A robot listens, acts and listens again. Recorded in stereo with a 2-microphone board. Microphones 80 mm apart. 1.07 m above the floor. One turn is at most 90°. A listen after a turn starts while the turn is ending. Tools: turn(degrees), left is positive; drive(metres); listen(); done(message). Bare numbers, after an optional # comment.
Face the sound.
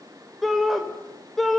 turn(30)
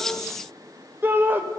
# So it is at 25° right.
turn(-25)
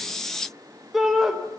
done("Found it: a shout, straight ahead.")